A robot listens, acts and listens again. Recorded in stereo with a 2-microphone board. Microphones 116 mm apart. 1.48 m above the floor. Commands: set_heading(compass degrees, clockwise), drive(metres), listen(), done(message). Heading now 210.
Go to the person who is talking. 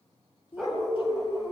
set_heading(155)
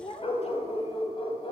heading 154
set_heading(89)
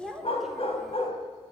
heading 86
drive(1.0)
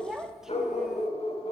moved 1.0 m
drive(1.0)
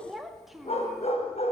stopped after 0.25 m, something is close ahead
done("Arrived at the child speaking, straight ahead.")